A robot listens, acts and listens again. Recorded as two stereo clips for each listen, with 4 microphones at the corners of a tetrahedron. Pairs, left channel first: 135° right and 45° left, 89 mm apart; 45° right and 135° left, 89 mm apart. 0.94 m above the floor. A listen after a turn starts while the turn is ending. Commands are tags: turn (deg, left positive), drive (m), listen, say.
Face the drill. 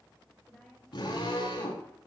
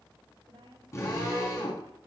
<turn deg="-100"/>
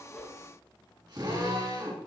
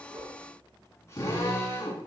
<turn deg="10"/>
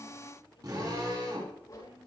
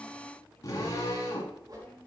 <say>Found it: a drill, straight ahead.</say>